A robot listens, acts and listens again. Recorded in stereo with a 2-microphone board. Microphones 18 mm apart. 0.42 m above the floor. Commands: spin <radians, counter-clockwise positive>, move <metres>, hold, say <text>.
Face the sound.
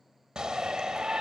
spin -0.79
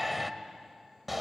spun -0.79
spin -0.17
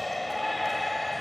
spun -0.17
say Facing the shout, 1 to 2 m away.